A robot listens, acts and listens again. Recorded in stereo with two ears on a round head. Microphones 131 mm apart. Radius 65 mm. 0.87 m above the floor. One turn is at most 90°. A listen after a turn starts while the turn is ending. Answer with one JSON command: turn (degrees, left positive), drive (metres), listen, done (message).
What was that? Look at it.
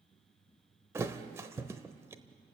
{"turn": -20}
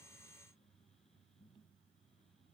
{"listen": true}
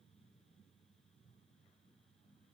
{"done": "I heard a thud, but can't make it out now. It was about straight ahead or 140° right."}